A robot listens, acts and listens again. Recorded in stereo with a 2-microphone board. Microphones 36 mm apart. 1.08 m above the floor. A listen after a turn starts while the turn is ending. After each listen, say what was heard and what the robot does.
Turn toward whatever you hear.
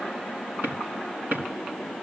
The drawer: about 70° right or 110° right. Turn 70° right.
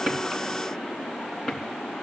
Facing the drawer, over 4 m away.